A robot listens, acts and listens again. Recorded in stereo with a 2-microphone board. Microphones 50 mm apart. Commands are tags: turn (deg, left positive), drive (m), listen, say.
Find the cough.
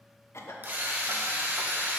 <turn deg="60"/>
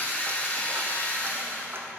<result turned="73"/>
<listen/>
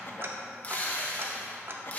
<listen/>
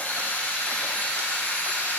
<say>I heard a cough, but can't make it out now. It was about 10° right or 45° left.</say>